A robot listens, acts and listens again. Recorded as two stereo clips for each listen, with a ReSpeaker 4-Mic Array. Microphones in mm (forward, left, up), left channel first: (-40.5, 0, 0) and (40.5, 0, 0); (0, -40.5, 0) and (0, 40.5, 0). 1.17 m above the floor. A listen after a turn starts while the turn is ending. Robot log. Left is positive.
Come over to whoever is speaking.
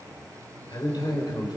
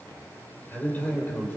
note: The man speaking: 155° right.
cmd yaw -155
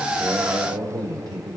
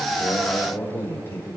note: The man speaking is now 25° right.
cmd yaw -25
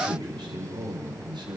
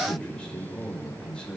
note: The man speaking is now 10° right.
cmd yaw -10
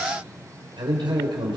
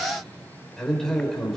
cmd fwd 1.0
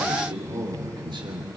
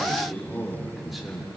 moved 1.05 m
cmd fwd 1.0
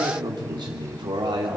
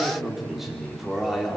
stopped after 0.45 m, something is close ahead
end: Something is in my way. I am facing the man speaking but have not reached it.